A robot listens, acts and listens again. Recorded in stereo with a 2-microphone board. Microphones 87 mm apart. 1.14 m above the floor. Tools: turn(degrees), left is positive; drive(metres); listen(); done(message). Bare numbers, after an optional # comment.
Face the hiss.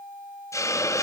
# The hiss: about 40° left or 140° left.
turn(40)
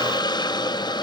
# So it is at 90° left.
turn(90)
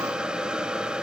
# The hiss is now 15° right.
turn(-15)
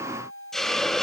done("Found it: a hiss, straight ahead, under 1 m away.")